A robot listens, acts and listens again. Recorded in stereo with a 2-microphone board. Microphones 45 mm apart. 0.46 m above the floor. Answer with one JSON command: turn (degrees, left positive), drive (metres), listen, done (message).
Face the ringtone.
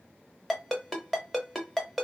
{"turn": 30}
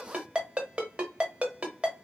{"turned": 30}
{"turn": -25}
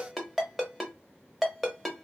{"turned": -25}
{"done": "Found it: a ringtone, straight ahead."}